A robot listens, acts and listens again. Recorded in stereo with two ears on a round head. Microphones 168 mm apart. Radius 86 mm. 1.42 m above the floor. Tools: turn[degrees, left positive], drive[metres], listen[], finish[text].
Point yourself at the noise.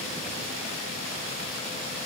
Action: listen[]
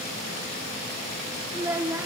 Action: turn[-30]
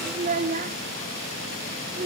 Thought: So it is at 135° right.
Action: turn[-135]
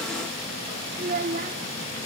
Thought: The child speaking is now 40° right.
Action: turn[-40]
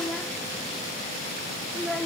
Action: finish[Found it: a child speaking, straight ahead, 1 to 2 m away.]